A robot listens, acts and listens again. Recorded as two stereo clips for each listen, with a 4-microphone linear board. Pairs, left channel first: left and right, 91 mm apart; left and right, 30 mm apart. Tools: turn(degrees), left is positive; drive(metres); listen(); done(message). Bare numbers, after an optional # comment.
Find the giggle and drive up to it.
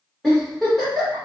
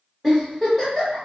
turn(30)
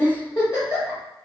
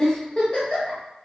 # So it is at 145° left.
turn(145)
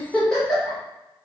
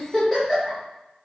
drive(1.0)
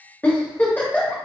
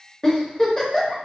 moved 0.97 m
# The giggle is now 20° left.
turn(20)
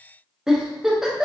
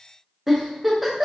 drive(1.0)
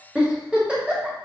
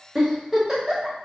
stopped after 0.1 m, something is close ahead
# The giggle is now 10° right.
turn(-10)
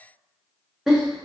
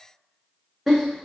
done("Arrived at the giggle, straight ahead.")